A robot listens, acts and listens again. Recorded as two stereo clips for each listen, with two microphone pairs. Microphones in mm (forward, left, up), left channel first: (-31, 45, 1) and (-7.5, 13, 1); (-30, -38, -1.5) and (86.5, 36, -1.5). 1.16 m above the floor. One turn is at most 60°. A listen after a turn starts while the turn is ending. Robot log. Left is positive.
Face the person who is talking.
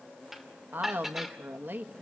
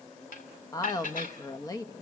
note: The woman speaking: 85° right.
cmd yaw -60
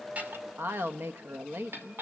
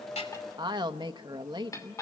note: The woman speaking is now 25° right.
cmd yaw -25
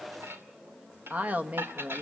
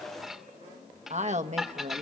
end: Facing the woman speaking, 1 to 2 m away.